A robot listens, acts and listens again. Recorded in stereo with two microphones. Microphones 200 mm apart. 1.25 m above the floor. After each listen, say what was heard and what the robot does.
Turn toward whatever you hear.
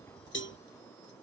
The cowbell: about 70° left or 110° left. Turn 70° left.
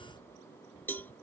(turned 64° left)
So it is at 10° left. Turn 10° left.
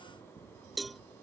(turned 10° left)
Facing the cowbell.